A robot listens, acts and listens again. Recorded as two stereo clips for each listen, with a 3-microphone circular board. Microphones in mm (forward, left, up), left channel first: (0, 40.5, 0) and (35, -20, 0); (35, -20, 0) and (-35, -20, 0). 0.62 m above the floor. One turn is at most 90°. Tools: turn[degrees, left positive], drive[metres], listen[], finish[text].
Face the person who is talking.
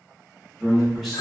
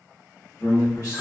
Thought: The man speaking: 30° left.
Action: turn[30]
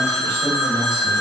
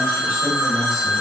Action: listen[]
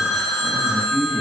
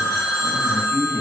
Thought: The man speaking is now 10° left.
Action: turn[10]
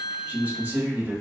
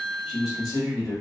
Action: finish[Found it: a man speaking, straight ahead, 1 to 2 m away.]